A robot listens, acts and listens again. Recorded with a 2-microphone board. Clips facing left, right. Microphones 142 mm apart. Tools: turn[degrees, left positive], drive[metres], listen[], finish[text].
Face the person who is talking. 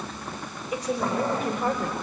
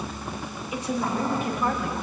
Thought: The woman speaking: about 40° left or 140° left.
Action: turn[40]
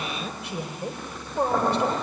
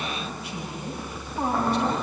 Thought: So it is at 100° left.
Action: turn[100]
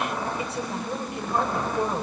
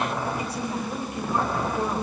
Thought: The woman speaking is now 25° left.
Action: turn[25]
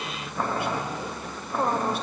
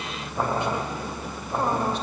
Action: listen[]
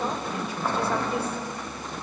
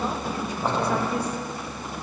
Action: listen[]
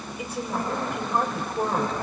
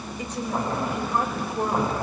Thought: The woman speaking is now 10° left.
Action: turn[10]
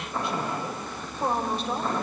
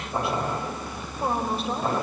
Action: finish[Found it: a woman speaking, straight ahead, over 4 m away.]